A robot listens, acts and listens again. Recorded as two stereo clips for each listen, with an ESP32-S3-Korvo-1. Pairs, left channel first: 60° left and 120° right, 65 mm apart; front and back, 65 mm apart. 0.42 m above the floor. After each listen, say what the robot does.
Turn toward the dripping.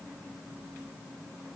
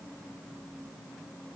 Keep listening.
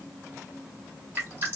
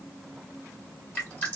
Turn 60° right.
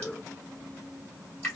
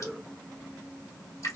Facing the dripping.